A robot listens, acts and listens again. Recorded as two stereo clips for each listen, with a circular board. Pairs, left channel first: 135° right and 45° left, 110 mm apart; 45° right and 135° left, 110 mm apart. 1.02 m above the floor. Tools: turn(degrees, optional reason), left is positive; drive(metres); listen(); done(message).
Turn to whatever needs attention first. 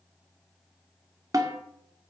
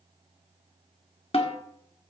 listen()
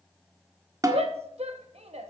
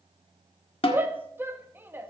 turn(degrees=65, reason="The shout: 65° left.")
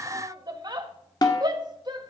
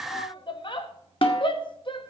done("Found it: a shout, straight ahead.")